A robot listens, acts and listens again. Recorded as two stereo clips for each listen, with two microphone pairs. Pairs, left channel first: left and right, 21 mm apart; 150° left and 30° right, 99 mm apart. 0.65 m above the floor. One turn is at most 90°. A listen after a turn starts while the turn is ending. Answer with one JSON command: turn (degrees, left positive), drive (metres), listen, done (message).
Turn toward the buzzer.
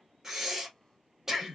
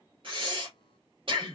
{"listen": true}
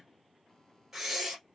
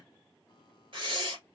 {"listen": true}
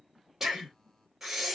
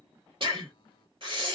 {"done": "I can't make out a buzzer, only breathing."}